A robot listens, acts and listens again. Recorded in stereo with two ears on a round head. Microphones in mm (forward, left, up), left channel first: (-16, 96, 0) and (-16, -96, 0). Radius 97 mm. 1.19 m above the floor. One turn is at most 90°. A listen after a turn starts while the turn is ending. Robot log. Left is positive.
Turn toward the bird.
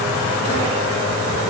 cmd idle
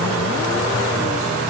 cmd idle
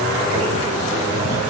end: I can't make out a bird to turn to.